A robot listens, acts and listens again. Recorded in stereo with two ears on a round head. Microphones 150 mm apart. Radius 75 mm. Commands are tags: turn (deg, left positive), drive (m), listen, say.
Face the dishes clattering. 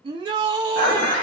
<turn deg="30"/>
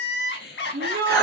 <say>Facing the dishes clattering, 1 to 2 m away.</say>